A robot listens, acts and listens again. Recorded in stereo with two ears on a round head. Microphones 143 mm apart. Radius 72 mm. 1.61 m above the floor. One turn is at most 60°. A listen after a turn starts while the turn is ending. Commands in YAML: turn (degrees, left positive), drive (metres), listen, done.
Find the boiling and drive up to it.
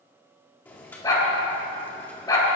turn: 30
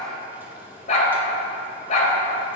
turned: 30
listen: true
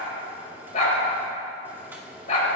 turn: -15
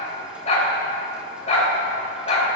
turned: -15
listen: true
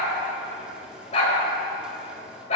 listen: true
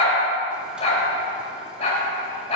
done: "Facing where the boiling came from. I can't hear it now. I did not reach it."